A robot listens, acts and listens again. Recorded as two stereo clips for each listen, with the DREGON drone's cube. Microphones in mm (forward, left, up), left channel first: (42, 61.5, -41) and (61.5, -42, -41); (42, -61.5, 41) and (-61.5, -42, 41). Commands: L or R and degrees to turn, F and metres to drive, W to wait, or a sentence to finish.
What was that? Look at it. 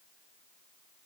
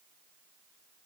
W
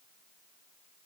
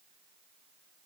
W
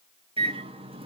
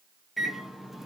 R105
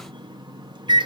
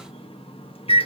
R35
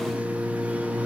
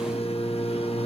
Found it: a microwave, straight ahead.